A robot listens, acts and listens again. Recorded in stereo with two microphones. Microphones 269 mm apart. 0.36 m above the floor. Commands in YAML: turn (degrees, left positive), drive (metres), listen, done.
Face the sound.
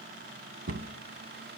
turn: -55
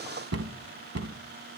turn: -70
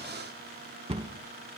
turn: -25
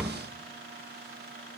done: "Found it: a cupboard door, straight ahead, 1 to 2 m away."